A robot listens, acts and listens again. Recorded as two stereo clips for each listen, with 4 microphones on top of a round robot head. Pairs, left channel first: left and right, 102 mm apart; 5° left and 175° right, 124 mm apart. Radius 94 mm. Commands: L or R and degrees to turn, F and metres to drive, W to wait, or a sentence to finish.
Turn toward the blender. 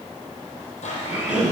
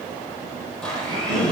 L85
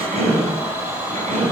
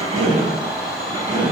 R20
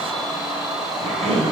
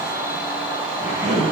Facing the blender, over 4 m away.